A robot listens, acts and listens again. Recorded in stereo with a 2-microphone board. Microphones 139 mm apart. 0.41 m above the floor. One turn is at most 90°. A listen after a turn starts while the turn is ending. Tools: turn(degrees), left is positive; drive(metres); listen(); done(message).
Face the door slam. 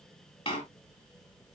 turn(degrees=40)
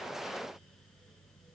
listen()
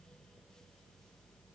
done("I heard a door slam, but can't make it out now. It was about straight ahead or 100° left.")